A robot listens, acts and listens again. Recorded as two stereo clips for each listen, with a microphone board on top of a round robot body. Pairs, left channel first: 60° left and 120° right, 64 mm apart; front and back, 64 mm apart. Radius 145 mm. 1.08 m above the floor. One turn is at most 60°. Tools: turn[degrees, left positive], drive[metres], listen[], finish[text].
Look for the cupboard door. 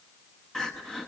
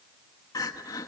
Action: listen[]
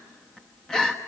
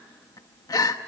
Action: listen[]
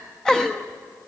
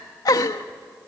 Action: finish[I can't make out a cupboard door to turn to.]